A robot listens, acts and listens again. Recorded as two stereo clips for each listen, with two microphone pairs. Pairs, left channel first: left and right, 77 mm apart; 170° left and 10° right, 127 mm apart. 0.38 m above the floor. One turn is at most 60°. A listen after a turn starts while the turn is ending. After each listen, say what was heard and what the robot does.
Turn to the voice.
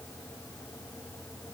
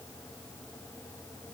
Keep listening.
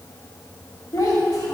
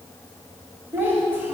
The child speaking: 60° left. Turn 60° left.
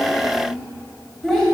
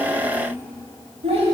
The child speaking is now 10° left. Turn 10° left.
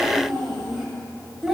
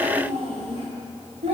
Found it: a child speaking, straight ahead.